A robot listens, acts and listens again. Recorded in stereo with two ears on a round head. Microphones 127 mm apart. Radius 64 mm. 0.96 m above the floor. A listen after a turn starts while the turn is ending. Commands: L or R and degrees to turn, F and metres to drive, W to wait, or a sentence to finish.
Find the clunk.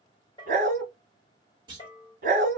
R35
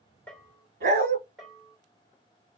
W
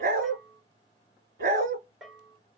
I heard a clunk, but can't make it out now. It was about straight ahead or 110° right.